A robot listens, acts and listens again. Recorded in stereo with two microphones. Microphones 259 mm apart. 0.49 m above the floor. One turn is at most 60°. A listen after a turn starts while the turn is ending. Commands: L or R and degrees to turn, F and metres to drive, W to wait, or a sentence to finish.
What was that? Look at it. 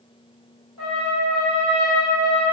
L60
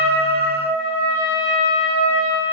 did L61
L30
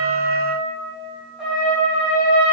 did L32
Found it: a trumpet, straight ahead, 1 to 2 m away.